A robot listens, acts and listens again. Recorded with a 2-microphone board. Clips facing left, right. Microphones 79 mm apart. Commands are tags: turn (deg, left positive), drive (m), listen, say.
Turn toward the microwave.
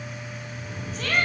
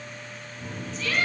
<turn deg="-70"/>
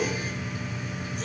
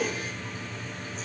<turn deg="-40"/>
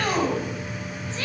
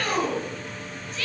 <say>Found it: a microwave, straight ahead.</say>